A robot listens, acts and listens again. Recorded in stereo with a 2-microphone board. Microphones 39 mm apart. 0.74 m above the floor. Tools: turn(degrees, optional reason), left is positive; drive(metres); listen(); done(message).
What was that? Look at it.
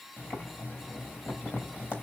turn(degrees=60, reason="The boiling: about 60° left or 120° left.")
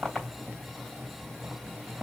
done("Found it: boiling, straight ahead, 2 to 4 m away.")